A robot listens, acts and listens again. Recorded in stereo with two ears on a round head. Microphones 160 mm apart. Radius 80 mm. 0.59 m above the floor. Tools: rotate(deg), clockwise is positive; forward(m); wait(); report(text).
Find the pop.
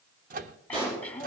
rotate(30)
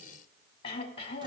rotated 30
wait()
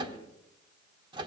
report("I heard a pop, but can't make it out now. It was about straight ahead or 120° right.")